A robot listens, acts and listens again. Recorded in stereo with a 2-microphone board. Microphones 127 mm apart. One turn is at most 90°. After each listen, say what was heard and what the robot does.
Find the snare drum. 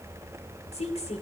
Keep listening.
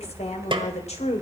The snare drum: about 40° right or 140° right. Turn 40° right.
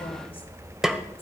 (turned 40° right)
Facing the snare drum, 1 to 2 m away.